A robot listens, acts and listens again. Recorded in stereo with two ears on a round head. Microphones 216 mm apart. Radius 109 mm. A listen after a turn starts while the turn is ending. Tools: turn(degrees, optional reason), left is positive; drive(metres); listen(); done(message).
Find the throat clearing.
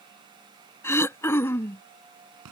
turn(degrees=30)
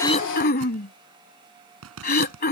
turn(degrees=135, reason="So it is at 135° left.")
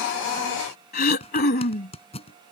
turn(degrees=40, reason="The throat clearing is now 40° left.")
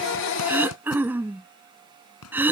turn(degrees=-10, reason="The throat clearing is now 10° right.")
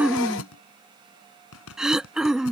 done("Found it: throat clearing, straight ahead.")